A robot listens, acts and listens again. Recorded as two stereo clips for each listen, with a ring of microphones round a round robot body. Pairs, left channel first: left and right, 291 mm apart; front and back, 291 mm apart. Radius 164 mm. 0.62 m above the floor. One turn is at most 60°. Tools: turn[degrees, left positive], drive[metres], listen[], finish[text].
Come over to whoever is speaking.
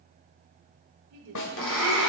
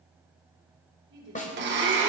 Thought: The woman speaking: 130° right.
Action: turn[-60]
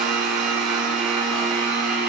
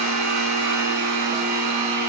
Thought: Nothing new. It was at 70° right.
Action: turn[-60]
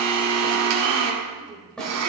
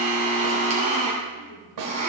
Thought: Nothing new. It was at 10° right.
Action: turn[-10]
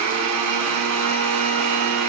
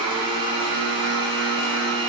Action: finish[Facing where the woman speaking came from. I can't hear it now. I did not reach it.]